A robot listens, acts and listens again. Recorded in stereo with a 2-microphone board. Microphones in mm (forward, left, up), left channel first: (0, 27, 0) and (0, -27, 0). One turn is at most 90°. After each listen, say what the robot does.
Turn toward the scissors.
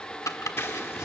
Turn 50° left.
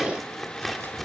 Facing the scissors.